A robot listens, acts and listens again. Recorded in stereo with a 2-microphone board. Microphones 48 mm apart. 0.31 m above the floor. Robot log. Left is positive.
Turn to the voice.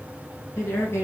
cmd yaw +90
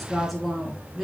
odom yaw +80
end: Found it: a woman speaking, straight ahead.